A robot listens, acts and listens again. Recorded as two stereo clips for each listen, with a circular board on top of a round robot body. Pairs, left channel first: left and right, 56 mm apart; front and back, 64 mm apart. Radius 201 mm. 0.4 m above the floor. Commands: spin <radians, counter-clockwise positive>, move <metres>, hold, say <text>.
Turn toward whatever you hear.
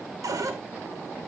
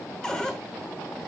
spin -1.40
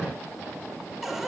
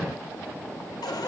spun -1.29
say Found it: a cupboard door, straight ahead, 1 to 2 m away.